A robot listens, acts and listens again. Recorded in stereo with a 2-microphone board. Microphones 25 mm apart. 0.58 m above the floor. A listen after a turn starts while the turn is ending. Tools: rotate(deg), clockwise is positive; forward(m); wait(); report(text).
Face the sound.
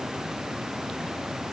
wait()
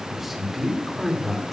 rotate(-30)
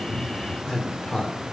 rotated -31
rotate(-135)
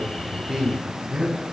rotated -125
rotate(20)
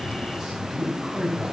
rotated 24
report("Found it: a man speaking, straight ahead, 2 to 4 m away.")